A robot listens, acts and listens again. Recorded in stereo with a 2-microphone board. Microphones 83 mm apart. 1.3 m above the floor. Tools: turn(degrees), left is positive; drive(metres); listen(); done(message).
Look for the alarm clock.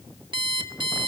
turn(degrees=-65)
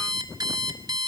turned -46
turn(degrees=-55)
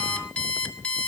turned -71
turn(degrees=15)
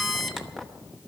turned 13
done("Facing the alarm clock.")